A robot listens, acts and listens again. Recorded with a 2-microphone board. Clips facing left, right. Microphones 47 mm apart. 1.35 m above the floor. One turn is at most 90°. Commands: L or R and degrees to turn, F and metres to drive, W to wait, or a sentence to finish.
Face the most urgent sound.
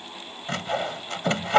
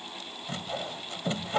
W
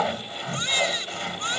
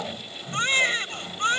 R35
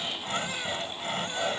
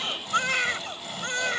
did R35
R90
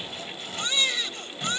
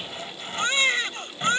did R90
R40
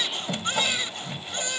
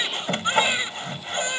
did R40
R25
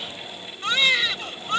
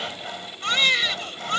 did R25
Found it: a baby crying, straight ahead.